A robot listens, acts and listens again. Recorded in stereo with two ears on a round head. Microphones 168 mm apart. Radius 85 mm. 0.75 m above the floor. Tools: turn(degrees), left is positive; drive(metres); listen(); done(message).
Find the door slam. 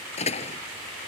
turn(degrees=35)
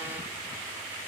listen()
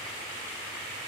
done("I heard a door slam, but can't make it out now. It was about straight ahead or 110° left.")